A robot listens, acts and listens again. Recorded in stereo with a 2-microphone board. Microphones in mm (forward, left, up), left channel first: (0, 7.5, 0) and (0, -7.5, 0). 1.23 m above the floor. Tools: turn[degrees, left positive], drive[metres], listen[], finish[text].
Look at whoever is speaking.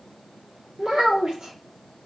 Action: turn[-90]
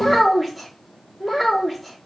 Action: finish[Found it: a child speaking, straight ahead.]